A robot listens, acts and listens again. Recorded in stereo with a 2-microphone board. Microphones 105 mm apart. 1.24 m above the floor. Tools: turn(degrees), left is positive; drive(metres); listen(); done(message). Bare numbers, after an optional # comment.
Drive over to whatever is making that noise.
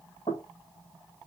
# The knocking: about 70° left or 110° left.
turn(70)
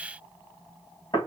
# So it is at 40° left.
turn(40)
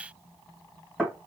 drive(1.0)
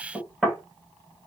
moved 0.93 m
drive(1.0)
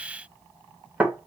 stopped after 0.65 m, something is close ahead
# The knocking is now 15° right.
turn(-15)
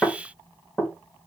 done("Arrived at the knocking, straight ahead.")